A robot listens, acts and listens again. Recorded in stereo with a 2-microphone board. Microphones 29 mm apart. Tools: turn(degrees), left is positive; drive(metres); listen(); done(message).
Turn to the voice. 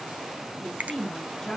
turn(degrees=20)
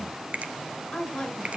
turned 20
turn(degrees=140)
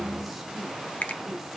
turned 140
listen()
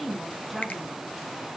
done("Facing the woman speaking.")